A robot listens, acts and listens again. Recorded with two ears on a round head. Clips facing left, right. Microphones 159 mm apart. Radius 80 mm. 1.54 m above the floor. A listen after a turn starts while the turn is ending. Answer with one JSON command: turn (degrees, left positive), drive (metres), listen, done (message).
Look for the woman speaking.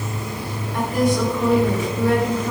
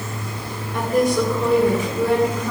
{"turn": -90}
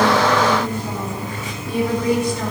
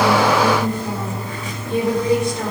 {"turn": -25}
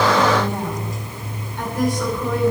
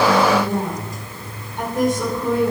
{"turn": -20}
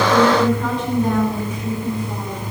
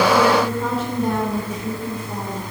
{"done": "Facing the woman speaking, over 4 m away."}